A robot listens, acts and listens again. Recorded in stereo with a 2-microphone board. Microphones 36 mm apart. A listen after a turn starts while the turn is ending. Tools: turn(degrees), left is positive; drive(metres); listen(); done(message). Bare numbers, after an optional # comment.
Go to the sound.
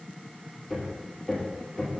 turn(30)
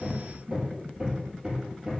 # So it is at 30° right.
turn(-30)
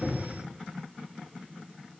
listen()
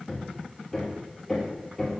drive(1.0)
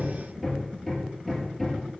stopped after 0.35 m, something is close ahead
done("Something is in my way. I am facing the hammering but have not reached it.")